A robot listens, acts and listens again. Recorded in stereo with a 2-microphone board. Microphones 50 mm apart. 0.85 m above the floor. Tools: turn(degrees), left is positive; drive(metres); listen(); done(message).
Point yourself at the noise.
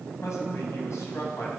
turn(degrees=70)
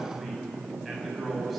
done("Facing the man speaking.")